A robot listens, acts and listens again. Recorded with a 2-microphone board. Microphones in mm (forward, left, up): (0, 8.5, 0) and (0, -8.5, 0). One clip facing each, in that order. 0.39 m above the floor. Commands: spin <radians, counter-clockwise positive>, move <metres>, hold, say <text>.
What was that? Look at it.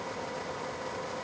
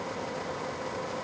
hold
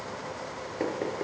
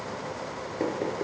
spin 0.52
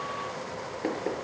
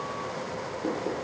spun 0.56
spin 2.44
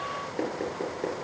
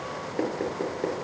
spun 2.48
say Found it: knocking, straight ahead, over 4 m away.